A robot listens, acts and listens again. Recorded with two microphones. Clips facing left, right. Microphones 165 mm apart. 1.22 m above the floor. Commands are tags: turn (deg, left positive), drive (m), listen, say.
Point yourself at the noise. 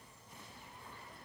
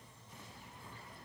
<listen/>
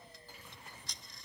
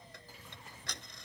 <turn deg="-70"/>
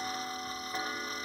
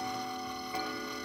<turn deg="-10"/>
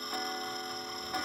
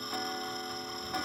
<say>Facing the ticking.</say>